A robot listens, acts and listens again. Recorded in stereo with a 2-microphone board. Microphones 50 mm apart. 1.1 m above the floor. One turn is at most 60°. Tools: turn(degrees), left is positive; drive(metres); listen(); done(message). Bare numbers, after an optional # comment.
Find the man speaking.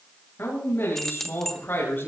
# The man speaking: about 40° left or 140° left.
turn(40)
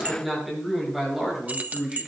# So it is at 10° right.
turn(-10)
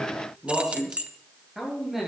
# The man speaking is now 10° right.
turn(-10)
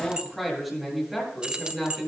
done("Found it: a man speaking, straight ahead, over 4 m away.")